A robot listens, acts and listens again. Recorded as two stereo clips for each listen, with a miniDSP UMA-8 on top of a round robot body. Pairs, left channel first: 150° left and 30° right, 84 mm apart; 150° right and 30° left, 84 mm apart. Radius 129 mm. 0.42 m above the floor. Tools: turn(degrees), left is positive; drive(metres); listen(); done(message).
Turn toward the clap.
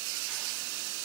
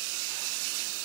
listen()
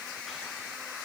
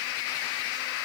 listen()
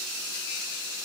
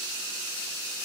done("I can't make out a clap.")